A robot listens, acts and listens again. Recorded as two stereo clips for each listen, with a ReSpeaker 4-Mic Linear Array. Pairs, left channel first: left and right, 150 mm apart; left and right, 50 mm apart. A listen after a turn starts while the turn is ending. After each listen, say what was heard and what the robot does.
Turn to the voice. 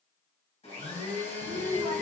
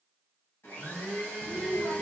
Turn 30° left.
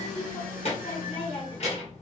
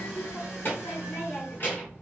So it is at 135° left. Turn 135° left.
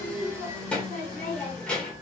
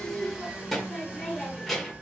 Facing the child speaking, 1 to 2 m away.